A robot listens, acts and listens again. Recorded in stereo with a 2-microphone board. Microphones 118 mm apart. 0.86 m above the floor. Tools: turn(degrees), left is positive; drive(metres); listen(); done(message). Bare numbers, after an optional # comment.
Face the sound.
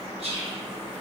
# The whispering: about 60° right or 120° right.
turn(-60)
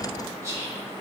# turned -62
# So it is at 30° right.
turn(-30)
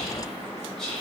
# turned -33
done("Found it: whispering, straight ahead.")